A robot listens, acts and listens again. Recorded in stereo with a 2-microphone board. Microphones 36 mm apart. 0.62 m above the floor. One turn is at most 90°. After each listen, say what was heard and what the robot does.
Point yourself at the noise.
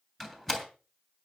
Turn 30° left.
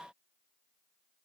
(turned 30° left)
Keep listening.
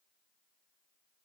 I heard a door slam, but can't make it out now. It was about 25° right or 145° left.